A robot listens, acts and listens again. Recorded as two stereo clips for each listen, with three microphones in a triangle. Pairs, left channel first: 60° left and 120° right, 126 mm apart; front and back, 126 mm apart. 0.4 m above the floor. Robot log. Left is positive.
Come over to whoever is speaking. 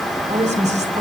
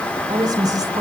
note: The woman speaking: 125° right.
cmd yaw -125
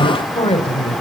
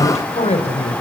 note: The woman speaking is now 25° left.
cmd yaw +25
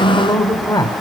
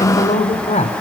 cmd fwd 1.0
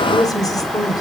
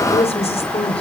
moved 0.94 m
cmd fwd 1.0
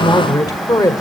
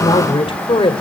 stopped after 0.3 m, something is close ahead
note: The woman speaking is now 15° left.
cmd yaw +15
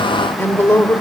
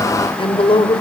end: I am next to the woman speaking.